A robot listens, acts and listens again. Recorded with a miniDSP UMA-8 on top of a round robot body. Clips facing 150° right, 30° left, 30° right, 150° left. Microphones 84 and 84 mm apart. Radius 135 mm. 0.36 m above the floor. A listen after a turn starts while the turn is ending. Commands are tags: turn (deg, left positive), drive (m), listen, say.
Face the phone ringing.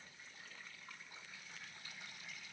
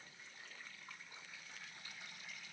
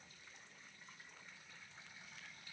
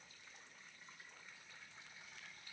<listen/>
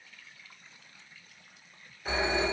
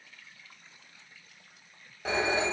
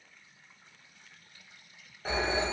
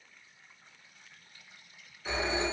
<turn deg="20"/>
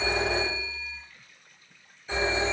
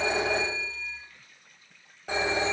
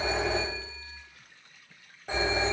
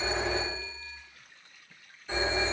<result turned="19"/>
<say>Facing the phone ringing.</say>